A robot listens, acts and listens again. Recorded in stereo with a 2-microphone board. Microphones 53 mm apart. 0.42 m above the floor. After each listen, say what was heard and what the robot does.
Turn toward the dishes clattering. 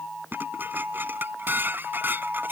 The dishes clattering: about 40° right or 140° right. Turn 40° right.
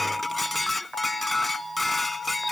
Facing the dishes clattering.